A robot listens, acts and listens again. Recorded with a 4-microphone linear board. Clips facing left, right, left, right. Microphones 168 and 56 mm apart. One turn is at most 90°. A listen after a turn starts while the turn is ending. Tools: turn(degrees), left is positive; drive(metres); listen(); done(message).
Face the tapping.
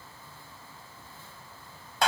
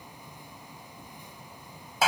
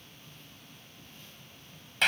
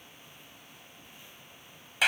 listen()
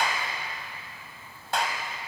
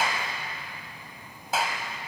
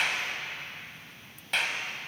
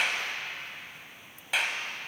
listen()
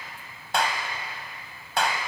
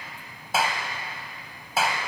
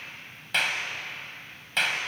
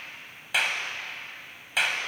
done("I can't make out tapping, only a clap.")